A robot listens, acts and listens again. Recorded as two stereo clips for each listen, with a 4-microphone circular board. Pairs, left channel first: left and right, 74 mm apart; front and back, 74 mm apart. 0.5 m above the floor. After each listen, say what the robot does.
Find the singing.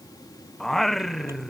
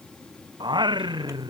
Turn 175° left.
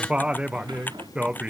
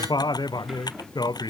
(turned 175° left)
Turn 15° right.
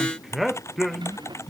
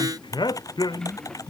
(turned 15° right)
Facing the singing.